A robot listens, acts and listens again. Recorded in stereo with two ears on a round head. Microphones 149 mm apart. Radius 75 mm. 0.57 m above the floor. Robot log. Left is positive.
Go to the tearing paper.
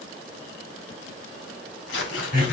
cmd yaw +90
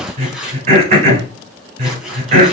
cmd fwd 1.0
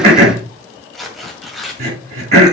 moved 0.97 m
cmd fwd 1.0
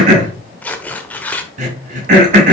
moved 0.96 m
note: The tearing paper is now 10° left.
cmd yaw +10
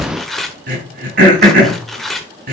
cmd fwd 1.0
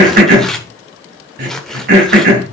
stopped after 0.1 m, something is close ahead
end: Arrived at the tearing paper, straight ahead.